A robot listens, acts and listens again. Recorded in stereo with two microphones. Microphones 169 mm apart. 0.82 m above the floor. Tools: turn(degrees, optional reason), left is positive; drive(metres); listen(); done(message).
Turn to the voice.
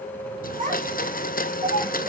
turn(degrees=-45, reason="The child speaking: about 45° right or 135° right.")
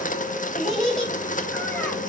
done("Found it: a child speaking, straight ahead, 2 to 4 m away.")